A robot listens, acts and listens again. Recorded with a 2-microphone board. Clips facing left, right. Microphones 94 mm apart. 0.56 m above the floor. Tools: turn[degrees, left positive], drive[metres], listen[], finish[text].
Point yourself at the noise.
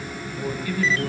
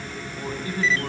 Thought: The man speaking: about 35° right or 145° right.
Action: turn[-35]
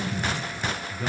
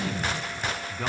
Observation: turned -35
Thought: So it is at 110° right.
Action: turn[-110]
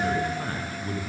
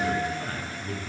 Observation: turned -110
Thought: The man speaking is now 35° left.
Action: turn[35]
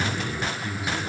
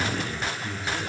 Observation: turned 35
Thought: The man speaking is now 10° left.
Action: turn[10]
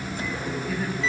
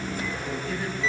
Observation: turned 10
Action: finish[Found it: a man speaking, straight ahead.]